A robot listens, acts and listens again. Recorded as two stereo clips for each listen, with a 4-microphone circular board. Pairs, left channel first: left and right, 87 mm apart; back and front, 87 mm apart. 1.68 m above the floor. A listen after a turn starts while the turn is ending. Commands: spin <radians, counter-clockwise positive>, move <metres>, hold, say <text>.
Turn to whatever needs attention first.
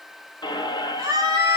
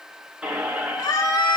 spin -2.44
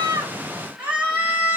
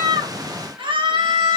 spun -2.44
spin -0.35
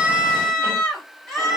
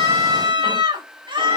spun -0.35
say Facing the scream.